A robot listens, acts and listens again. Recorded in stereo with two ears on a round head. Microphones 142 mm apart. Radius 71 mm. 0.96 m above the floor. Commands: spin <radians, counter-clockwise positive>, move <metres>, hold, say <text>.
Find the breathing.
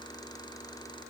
hold
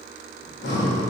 spin 1.22
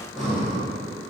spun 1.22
say Found it: breathing, straight ahead.